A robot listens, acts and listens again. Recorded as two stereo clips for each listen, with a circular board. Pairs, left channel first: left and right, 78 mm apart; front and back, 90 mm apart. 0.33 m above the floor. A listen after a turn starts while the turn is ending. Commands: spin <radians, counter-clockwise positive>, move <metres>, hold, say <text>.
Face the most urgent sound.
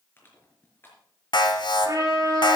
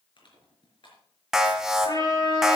spin 1.66
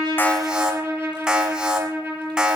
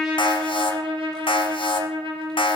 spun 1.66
spin -0.17
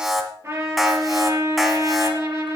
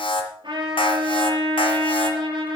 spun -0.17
say Facing the alarm, 1 to 2 m away.